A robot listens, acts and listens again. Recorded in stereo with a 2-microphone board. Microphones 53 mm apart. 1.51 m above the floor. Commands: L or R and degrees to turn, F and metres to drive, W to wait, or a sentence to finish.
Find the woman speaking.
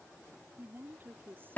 R40
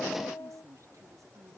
R100
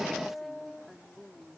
Found it: a woman speaking, straight ahead.